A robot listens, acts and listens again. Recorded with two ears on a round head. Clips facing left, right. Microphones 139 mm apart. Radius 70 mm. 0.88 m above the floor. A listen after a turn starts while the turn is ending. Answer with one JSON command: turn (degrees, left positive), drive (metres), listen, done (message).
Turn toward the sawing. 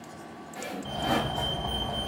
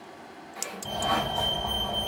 {"turn": 30}
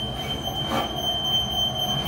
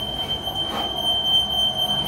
{"listen": true}
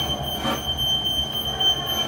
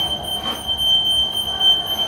{"listen": true}
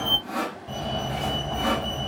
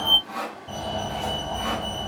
{"turn": 120}
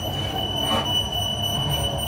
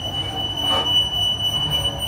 {"listen": true}
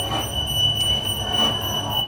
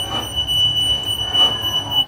{"listen": true}
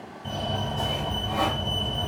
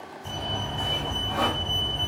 {"done": "Facing where the sawing came from. I can't hear it now."}